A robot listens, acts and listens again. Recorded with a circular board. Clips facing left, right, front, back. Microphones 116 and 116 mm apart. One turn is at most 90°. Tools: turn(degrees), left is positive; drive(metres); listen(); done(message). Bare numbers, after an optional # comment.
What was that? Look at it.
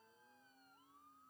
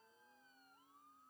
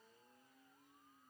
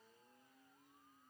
listen()
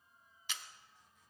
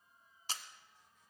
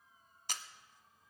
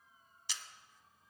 # The camera shutter: 40° right.
turn(-40)
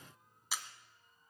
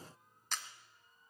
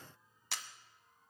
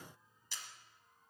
# The camera shutter is now 10° left.
turn(10)
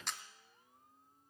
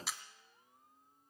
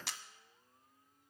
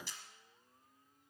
done("Facing the camera shutter, 1 to 2 m away.")